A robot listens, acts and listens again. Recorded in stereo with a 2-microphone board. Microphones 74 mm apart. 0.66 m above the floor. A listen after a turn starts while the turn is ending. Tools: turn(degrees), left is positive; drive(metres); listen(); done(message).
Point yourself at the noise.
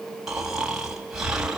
turn(degrees=-30)
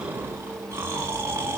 turn(degrees=-145)
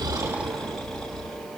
done("Found it: snoring, straight ahead, 2 to 4 m away.")